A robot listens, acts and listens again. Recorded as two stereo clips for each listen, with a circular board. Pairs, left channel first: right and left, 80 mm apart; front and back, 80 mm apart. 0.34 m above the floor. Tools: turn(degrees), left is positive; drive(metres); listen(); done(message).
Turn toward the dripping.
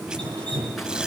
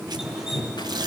turn(degrees=100)
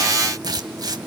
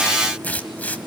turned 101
listen()
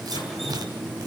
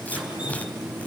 done("Found it: dripping, straight ahead, over 4 m away.")